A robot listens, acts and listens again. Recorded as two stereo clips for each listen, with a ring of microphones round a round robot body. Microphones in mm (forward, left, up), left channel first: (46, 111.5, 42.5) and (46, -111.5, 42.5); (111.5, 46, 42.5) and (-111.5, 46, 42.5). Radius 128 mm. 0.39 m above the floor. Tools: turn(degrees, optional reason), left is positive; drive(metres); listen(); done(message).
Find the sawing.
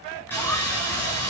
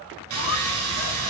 turn(degrees=170, reason="The sawing: 170° left.")
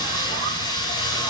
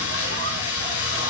turn(degrees=20, reason="The sawing is now 20° left.")
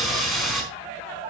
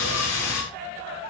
done("Found it: sawing, straight ahead.")